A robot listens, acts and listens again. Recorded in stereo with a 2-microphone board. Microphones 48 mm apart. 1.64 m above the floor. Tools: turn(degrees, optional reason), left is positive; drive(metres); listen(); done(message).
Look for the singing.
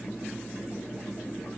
listen()
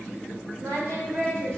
turn(degrees=-55, reason="The singing: about 55° right or 125° right.")
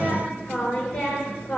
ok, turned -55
turn(degrees=15, reason="So it is at 15° left.")
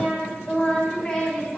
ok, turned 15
turn(degrees=20, reason="The singing is now 20° left.")
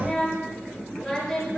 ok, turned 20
done("Found it: singing, straight ahead.")